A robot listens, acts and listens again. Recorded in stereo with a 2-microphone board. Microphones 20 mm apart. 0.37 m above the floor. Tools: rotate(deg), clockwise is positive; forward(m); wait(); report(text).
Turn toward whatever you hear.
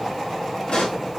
rotate(-65)
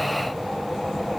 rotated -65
wait()
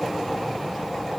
report("I heard a pop, but can't make it out now. It was about straight ahead or 50° left.")